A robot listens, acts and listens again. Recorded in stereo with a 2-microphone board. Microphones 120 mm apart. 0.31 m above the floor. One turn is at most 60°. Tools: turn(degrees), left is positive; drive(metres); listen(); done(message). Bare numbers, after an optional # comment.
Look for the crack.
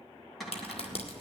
# The crack: about 55° left or 125° left.
turn(55)
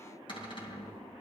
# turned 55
listen()
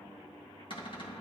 done("I heard a crack, but can't make it out now. It was about straight ahead or 70° left.")